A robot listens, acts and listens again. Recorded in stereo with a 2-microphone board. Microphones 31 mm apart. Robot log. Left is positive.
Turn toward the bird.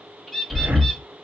cmd yaw +30
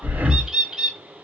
note: So it is at 30° right.
cmd yaw -30
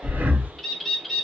end: Facing the bird.